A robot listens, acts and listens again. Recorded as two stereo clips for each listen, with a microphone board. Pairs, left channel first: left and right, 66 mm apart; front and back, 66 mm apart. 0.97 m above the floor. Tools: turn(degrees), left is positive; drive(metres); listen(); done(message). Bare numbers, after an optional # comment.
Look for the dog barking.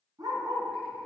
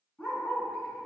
# The dog barking: 60° right.
turn(-60)
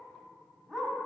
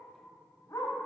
done("Found it: a dog barking, straight ahead, 1 to 2 m away.")